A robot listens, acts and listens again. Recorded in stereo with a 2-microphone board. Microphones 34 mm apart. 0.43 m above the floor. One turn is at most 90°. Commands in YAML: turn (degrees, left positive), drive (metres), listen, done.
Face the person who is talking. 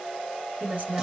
turn: -50
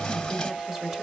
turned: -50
listen: true
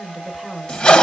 turn: -15
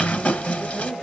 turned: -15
listen: true
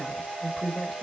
done: "Found it: a woman speaking, straight ahead."